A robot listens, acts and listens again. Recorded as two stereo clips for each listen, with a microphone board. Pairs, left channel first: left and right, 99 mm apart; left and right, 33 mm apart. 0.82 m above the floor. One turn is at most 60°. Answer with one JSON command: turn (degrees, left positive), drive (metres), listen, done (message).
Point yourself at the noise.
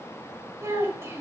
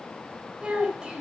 {"turn": -25}
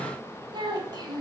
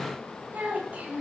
{"turn": -60}
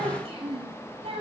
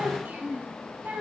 {"turn": -60}
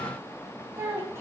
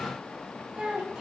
{"turn": -25}
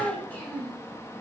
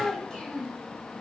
{"turn": 15}
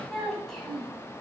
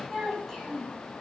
{"done": "Found it: a child speaking, straight ahead."}